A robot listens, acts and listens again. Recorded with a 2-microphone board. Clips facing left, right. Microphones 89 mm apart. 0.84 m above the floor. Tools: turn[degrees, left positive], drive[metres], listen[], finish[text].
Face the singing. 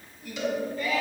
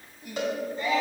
Thought: The singing: about 30° right or 150° right.
Action: turn[-30]
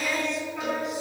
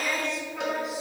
Action: finish[Found it: singing, straight ahead, 2 to 4 m away.]